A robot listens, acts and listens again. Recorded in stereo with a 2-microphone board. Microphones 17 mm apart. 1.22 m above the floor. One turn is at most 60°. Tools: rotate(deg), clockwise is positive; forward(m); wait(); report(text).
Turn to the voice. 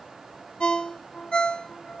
wait()
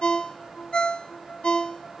wait()
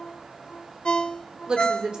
rotate(60)
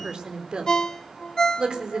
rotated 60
rotate(60)
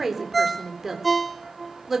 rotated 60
rotate(15)
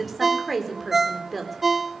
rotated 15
report("Found it: a woman speaking, straight ahead, 2 to 4 m away.")